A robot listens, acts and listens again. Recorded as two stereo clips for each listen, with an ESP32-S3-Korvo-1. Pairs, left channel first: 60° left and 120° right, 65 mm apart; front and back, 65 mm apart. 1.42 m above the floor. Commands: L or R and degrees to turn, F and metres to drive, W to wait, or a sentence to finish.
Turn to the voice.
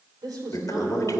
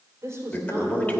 R140
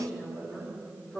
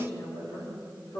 R15
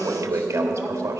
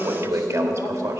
W
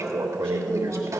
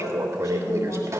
W
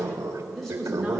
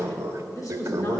R30
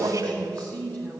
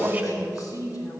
R10
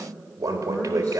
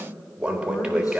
W
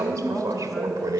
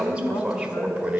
Found it: a woman speaking, straight ahead, 2 to 4 m away.